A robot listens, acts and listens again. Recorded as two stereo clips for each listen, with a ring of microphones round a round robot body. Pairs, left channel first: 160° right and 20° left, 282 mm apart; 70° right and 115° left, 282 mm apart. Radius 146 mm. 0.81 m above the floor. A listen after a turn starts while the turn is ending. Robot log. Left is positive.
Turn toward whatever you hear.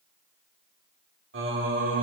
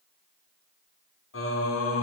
note: The singing: 25° right.
cmd yaw -25
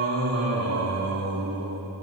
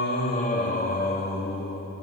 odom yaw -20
note: The singing is now 10° right.
cmd yaw -10
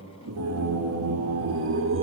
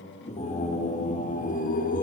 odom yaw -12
note: The singing is now 15° right.
cmd yaw -15
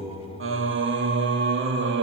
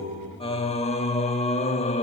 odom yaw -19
end: Facing the singing.